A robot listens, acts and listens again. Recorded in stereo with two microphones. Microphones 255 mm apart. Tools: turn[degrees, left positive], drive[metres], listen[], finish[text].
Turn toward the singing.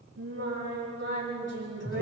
Action: turn[-90]
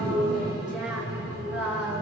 Action: finish[Facing the singing.]